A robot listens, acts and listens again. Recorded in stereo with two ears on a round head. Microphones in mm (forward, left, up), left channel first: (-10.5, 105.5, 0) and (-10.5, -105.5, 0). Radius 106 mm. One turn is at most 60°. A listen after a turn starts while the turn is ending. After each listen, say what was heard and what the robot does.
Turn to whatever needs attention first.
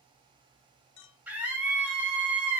Turn 30° right.
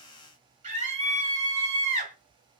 So it is at 140° right. Turn 60° right.
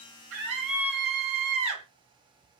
The scream is now 75° right. Turn 60° right.
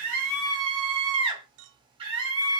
The scream is now 25° right. Turn 25° right.
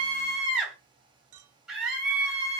Found it: a scream, straight ahead.